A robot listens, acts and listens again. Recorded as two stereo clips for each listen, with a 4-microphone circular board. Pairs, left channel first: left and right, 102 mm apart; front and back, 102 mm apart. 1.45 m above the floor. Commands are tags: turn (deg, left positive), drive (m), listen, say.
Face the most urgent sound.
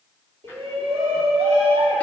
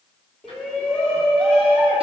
<turn deg="-80"/>
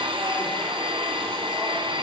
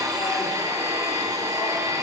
<listen/>
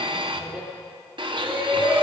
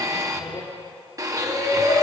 <turn deg="-10"/>
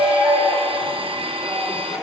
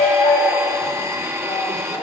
<say>Facing the shout.</say>